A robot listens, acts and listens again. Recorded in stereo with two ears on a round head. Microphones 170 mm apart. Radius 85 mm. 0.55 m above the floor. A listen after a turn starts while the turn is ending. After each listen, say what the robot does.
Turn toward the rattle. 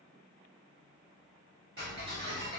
Keep listening.
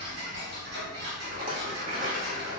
Turn 45° right.
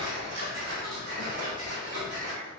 Turn 85° right.
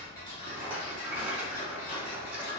Turn 10° right.
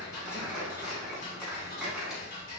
Keep listening.
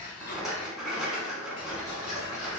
Found it: a rattle, straight ahead, under 1 m away.